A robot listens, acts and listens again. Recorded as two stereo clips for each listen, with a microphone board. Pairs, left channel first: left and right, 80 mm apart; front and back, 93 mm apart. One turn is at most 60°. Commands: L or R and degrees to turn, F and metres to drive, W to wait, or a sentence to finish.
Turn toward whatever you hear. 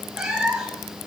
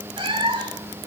R60
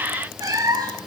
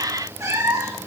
R60
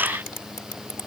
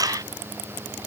R60
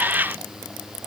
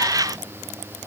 R10
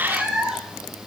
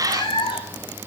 R10
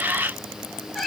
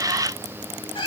Found it: a cat meowing, straight ahead.